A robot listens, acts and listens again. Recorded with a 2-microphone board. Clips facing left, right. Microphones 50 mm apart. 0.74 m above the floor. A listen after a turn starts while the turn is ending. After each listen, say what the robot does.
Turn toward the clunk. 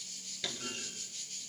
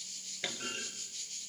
Turn 30° right.
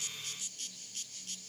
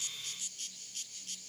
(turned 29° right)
Keep listening.
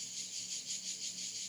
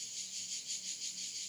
I heard a clunk, but can't make it out now. It was about straight ahead or 120° right.